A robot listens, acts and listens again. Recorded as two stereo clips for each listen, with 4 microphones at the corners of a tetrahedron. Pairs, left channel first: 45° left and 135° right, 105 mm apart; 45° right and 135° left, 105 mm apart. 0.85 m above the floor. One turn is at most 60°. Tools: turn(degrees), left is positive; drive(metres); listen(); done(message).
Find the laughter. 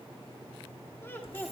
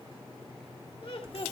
turn(degrees=-25)
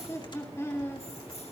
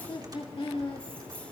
turn(degrees=-20)
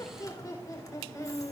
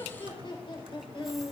turn(degrees=-10)
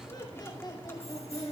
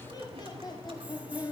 done("Facing the laughter, over 4 m away.")